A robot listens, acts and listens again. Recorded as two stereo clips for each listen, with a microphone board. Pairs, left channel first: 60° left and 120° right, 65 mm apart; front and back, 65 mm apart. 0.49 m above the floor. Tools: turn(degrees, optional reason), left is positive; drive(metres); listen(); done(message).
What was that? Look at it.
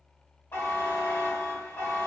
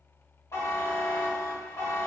turn(degrees=20, reason="The buzzer: 20° left.")
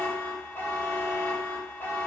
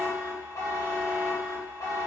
turn(degrees=10, reason="The buzzer is now 10° left.")
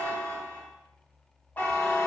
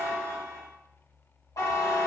done("Facing the buzzer, 2 to 4 m away.")